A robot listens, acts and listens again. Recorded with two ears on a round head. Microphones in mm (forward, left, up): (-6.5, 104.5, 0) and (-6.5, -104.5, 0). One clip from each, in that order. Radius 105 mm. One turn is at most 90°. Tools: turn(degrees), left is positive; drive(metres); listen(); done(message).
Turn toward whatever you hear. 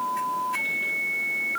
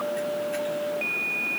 listen()
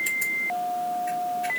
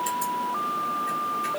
listen()
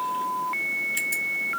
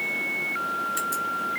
done("I can't make out anything.")